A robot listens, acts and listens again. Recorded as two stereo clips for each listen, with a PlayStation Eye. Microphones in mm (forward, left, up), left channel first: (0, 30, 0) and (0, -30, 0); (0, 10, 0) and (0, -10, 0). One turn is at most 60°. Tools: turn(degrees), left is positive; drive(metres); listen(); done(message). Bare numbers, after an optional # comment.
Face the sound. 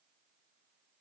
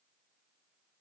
listen()
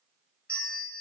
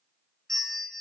# The bell: about 20° left or 160° left.
turn(20)
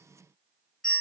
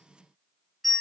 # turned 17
done("Found it: a bell, straight ahead.")